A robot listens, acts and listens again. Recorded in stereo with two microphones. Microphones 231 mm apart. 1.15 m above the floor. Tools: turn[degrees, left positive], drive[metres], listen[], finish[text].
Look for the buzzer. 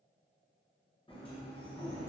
Action: listen[]
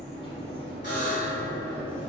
Thought: The buzzer: about 55° left or 125° left.
Action: turn[55]
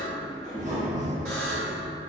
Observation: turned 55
Action: listen[]
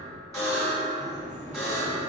Thought: So it is at 15° left.
Action: turn[15]
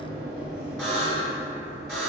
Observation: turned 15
Action: finish[Found it: a buzzer, straight ahead, 1 to 2 m away.]